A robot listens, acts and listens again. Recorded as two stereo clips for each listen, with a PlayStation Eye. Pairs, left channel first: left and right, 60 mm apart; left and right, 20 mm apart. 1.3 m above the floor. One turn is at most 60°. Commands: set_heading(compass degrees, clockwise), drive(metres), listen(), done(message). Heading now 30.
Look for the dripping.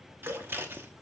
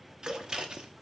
set_heading(90)
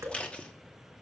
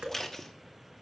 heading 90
set_heading(150)
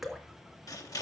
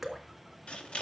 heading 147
done("Found it: dripping, straight ahead.")